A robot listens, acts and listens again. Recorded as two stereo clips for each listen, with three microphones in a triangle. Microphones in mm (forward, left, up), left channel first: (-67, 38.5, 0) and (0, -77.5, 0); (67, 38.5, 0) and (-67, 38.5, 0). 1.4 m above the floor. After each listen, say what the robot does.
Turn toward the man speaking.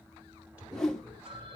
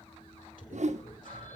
Turn 20° left.
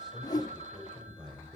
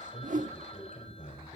Facing the man speaking.